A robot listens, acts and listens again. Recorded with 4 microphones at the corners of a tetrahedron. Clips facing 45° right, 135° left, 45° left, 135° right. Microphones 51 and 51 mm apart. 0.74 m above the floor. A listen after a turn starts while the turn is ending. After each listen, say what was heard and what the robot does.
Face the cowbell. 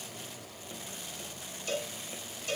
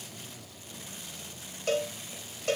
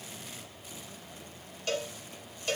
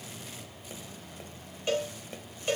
The cowbell: 155° left. Turn 155° left.
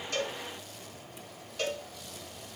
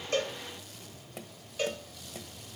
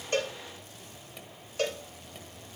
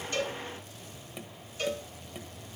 The cowbell is now 50° left. Turn 50° left.
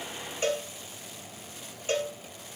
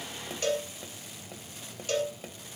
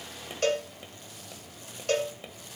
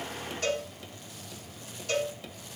The cowbell is now 15° left. Turn 15° left.
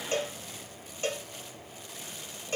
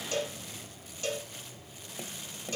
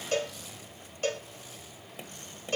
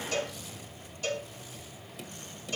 Facing the cowbell, 2 to 4 m away.